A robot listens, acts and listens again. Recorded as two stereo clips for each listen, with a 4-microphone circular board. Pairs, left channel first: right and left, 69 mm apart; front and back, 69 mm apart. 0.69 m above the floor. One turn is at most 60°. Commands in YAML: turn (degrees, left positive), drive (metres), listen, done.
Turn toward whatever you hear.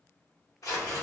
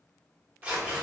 turn: -60
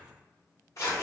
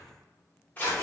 turn: -60
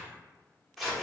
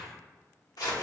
done: "Facing the tearing paper, 1 to 2 m away."